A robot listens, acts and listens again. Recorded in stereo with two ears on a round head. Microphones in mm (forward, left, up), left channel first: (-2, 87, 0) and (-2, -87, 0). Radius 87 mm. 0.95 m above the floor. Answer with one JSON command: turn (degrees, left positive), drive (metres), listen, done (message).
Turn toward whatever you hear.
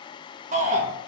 {"turn": -40}
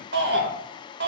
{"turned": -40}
{"turn": -95}
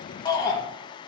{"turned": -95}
{"turn": 25}
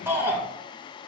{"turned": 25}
{"turn": -15}
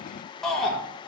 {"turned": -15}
{"done": "Found it: a shout, straight ahead, 1 to 2 m away."}